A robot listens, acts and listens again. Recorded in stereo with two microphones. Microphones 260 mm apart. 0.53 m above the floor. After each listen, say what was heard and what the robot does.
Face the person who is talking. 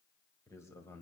Turn 30° left.
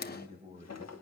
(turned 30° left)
So it is at 25° right. Turn 25° right.
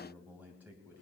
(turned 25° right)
The man speaking is now 10° right. Turn 10° right.
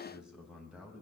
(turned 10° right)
Facing the man speaking.